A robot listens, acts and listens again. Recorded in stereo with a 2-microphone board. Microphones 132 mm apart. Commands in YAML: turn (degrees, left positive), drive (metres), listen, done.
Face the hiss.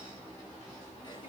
listen: true
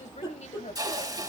turn: -30
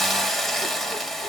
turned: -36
done: "Facing the hiss, 1 to 2 m away."